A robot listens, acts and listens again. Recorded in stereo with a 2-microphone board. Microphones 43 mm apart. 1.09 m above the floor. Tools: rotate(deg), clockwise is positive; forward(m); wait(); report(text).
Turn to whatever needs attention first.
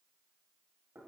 wait()
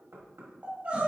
rotate(35)
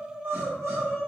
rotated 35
rotate(110)
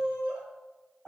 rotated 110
rotate(20)
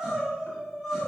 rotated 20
rotate(10)
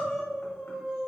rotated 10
report("Found it: crying, straight ahead.")